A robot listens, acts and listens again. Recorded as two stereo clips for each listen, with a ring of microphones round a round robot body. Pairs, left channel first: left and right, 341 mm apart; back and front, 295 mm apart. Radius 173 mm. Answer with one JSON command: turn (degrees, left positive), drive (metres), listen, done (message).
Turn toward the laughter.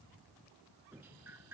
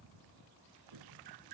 {"listen": true}
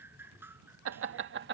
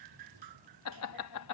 {"turn": -150}
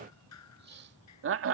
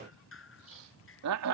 {"turn": -40}
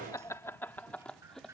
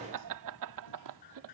{"done": "Found it: laughter, straight ahead."}